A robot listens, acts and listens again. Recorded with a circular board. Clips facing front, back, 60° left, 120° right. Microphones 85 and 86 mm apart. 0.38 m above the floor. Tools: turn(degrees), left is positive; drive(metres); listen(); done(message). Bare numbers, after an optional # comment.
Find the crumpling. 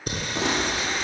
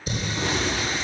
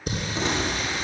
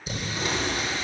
done("Found it: crumpling, straight ahead, over 4 m away.")